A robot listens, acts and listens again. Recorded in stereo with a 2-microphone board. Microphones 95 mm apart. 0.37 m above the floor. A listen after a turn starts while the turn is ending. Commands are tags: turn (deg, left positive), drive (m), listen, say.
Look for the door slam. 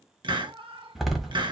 <turn deg="-30"/>
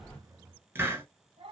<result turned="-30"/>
<listen/>
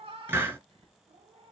<say>I heard a door slam, but can't make it out now. It was about 25° left or 145° right.</say>